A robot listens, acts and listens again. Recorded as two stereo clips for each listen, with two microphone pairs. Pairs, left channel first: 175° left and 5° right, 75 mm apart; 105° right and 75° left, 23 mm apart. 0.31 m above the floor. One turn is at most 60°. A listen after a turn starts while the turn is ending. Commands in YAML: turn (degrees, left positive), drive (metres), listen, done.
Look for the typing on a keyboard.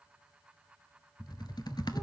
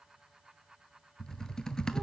turn: -60
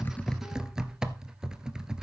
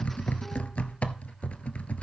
turn: -60
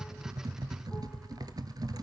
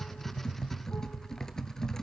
turn: -35
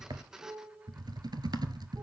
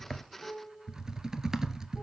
turn: 10
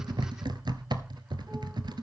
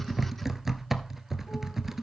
done: "Found it: typing on a keyboard, straight ahead, under 1 m away."